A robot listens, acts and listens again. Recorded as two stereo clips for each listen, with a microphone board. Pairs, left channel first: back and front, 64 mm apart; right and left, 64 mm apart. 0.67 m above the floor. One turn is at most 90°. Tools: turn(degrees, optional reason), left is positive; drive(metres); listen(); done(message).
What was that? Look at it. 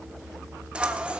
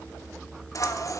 turn(degrees=-70, reason="The scissors: 70° right.")
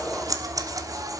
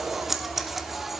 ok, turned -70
done("Found it: scissors, straight ahead, 1 to 2 m away.")